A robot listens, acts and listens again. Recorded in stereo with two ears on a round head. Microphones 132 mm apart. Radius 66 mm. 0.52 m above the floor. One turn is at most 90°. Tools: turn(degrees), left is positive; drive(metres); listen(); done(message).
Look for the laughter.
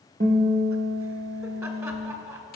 turn(degrees=-20)
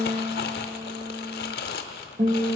listen()
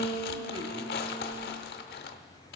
listen()
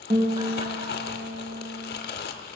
done("I heard laughter, but can't make it out now. It was about straight ahead or 140° right.")